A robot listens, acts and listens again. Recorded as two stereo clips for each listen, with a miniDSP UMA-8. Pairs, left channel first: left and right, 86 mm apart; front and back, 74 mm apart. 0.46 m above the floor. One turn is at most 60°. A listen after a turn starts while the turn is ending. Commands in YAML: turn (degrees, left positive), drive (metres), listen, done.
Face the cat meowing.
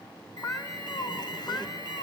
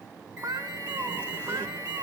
turn: 60
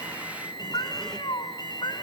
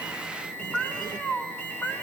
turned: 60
turn: 60
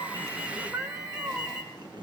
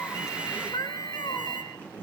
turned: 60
turn: -20
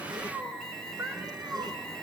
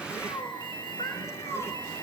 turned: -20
turn: -20
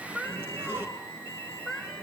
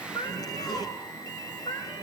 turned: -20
done: "Found it: a cat meowing, straight ahead, over 4 m away."